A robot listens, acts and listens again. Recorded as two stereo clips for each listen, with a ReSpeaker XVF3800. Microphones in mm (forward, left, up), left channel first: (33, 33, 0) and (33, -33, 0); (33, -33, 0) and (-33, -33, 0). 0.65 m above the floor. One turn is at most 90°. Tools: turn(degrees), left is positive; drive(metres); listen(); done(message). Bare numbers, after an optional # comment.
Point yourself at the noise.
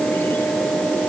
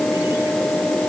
listen()
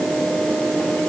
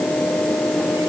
listen()
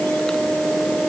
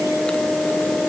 done("I can't make out anything.")